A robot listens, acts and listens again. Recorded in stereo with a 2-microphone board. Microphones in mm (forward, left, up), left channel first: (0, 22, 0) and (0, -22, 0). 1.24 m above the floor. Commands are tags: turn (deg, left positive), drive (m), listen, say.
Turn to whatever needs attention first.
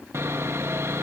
<listen/>
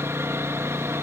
<listen/>
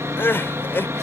<turn deg="50"/>
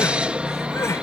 <turn deg="80"/>
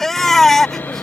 <turn deg="10"/>
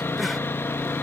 <listen/>
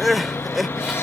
<say>Found it: crying, straight ahead.</say>